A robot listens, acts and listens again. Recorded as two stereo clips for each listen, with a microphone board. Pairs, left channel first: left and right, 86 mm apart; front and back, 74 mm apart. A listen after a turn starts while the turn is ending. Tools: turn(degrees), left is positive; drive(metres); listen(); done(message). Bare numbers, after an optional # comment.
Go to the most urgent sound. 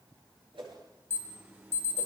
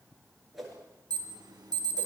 # The alarm: 155° right.
turn(-155)
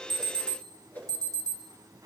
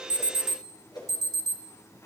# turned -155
# The alarm is now 40° right.
turn(-40)
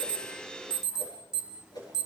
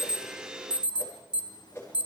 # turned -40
drive(1.0)
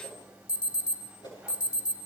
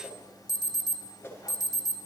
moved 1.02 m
# The alarm is now 15° right.
turn(-15)
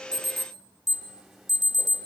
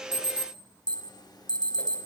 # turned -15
drive(1.0)
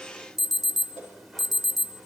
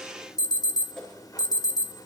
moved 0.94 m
drive(1.0)
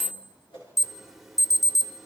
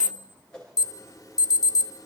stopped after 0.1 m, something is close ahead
done("Arrived at the alarm, straight ahead.")